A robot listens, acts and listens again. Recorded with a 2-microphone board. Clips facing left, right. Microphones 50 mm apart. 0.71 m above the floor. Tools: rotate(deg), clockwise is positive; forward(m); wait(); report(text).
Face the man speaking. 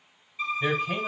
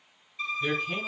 rotate(-50)
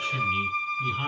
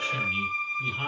report("Found it: a man speaking, straight ahead.")